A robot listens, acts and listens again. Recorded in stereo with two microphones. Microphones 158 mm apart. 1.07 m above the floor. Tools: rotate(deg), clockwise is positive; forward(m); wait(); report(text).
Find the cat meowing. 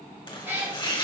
rotate(15)
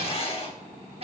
rotate(40)
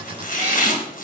wait()
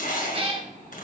rotate(35)
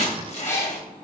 rotate(-20)
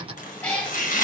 rotate(-10)
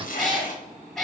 report("Facing the cat meowing, 1 to 2 m away.")